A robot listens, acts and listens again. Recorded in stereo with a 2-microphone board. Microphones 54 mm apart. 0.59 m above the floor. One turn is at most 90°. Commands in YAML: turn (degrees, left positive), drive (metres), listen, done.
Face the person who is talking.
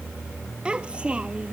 turn: -20
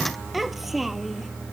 turn: 30
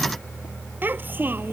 turn: -35
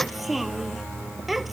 done: "Facing the child speaking."